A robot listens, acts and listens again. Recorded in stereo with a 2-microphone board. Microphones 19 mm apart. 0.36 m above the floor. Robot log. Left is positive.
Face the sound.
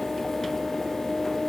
cmd idle
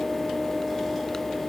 cmd idle
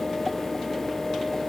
end: I can't make out anything.